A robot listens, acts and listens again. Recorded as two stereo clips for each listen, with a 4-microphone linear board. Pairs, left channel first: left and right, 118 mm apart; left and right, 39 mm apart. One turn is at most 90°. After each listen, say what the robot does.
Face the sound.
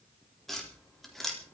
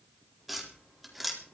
Turn 30° left.
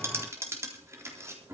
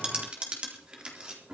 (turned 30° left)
Turn 25° right.
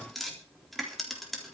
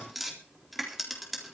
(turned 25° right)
Facing the tapping, 2 to 4 m away.